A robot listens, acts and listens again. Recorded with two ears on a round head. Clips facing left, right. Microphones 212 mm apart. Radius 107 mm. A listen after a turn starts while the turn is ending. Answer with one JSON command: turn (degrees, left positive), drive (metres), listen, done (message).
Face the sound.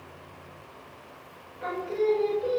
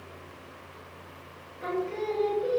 {"turn": 30}
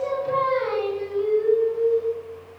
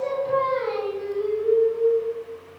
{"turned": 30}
{"turn": 125}
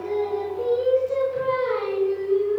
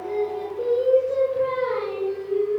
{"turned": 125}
{"turn": 15}
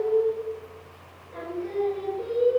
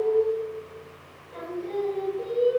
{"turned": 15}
{"done": "Found it: singing, straight ahead, 2 to 4 m away."}